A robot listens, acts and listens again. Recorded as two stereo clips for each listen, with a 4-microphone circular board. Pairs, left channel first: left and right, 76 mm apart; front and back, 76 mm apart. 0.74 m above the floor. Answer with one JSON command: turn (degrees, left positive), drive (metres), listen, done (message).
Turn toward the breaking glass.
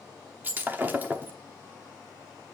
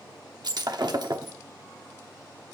{"turn": -155}
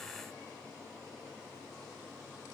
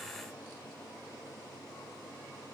{"done": "Facing where the breaking glass came from. I can't hear it now."}